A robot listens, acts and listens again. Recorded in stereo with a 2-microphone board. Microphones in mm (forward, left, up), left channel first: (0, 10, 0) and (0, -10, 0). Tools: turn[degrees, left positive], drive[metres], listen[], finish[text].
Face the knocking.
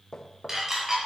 Thought: The knocking: about 35° left or 145° left.
Action: turn[35]
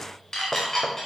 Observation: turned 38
Action: listen[]
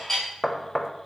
Action: finish[Found it: knocking, straight ahead.]